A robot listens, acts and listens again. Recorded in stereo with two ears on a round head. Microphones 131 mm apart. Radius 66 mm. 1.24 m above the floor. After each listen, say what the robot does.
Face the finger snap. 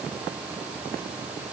Keep listening.
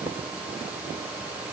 Keep listening.
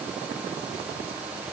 I can't make out a finger snap.